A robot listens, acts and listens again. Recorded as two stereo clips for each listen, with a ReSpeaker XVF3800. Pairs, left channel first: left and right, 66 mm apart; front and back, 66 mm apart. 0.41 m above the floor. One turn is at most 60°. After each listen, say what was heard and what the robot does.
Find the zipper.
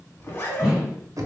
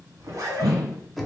The zipper: 145° left. Turn 60° left.
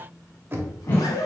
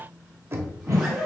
The zipper is now 100° left. Turn 60° left.
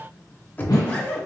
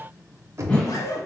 The zipper is now 25° left. Turn 25° left.
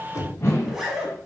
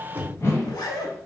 Found it: a zipper, straight ahead, 1 to 2 m away.